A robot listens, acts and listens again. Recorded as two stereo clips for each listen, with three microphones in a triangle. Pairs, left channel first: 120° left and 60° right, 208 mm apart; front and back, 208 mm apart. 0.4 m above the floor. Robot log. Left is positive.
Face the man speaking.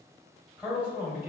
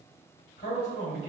note: The man speaking: 20° left.
cmd yaw +20
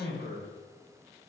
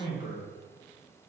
end: Found it: a man speaking, straight ahead.